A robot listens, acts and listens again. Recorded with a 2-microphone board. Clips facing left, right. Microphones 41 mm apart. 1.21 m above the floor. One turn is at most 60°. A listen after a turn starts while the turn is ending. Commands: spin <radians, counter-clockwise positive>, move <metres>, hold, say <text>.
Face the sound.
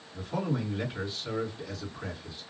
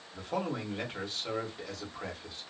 spin -1.05
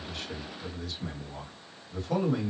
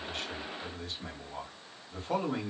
spin -0.79
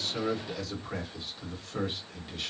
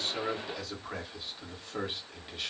spin -0.17
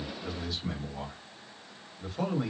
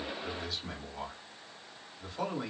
say Found it: a man speaking, straight ahead, 1 to 2 m away.